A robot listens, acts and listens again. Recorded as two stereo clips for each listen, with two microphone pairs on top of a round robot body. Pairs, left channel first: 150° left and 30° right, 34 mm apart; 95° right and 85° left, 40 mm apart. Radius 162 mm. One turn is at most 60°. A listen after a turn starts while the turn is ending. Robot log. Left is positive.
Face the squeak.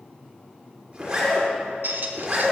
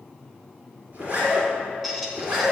end: Found it: a squeak, straight ahead.